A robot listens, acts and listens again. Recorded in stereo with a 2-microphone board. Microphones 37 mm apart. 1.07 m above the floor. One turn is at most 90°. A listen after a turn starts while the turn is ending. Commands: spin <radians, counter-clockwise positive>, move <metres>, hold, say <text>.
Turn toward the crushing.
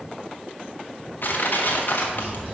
spin 1.05
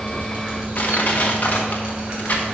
spin 0.96
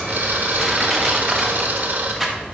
say Found it: crushing, straight ahead.